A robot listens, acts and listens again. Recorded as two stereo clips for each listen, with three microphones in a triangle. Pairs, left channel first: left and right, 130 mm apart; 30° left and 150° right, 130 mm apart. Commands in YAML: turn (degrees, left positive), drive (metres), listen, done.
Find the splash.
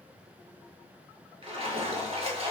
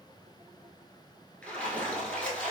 turn: -50
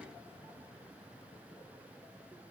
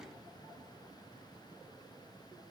done: "I heard a splash from this way, but can't make it out now."